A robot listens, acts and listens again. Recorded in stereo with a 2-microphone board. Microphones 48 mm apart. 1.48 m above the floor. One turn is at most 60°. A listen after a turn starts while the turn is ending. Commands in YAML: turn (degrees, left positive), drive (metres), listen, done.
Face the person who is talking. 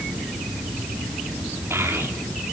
turn: -60
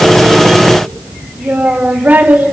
turn: -40
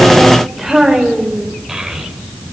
done: "Facing the child speaking, over 4 m away."